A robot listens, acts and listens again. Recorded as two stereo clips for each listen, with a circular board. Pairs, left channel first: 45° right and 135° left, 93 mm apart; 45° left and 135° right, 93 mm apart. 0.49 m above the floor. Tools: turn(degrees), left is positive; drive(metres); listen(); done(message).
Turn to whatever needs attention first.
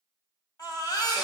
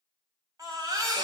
turn(degrees=-85)
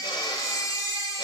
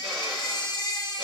turn(degrees=10)
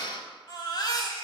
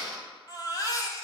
done("Found it: a baby crying, straight ahead.")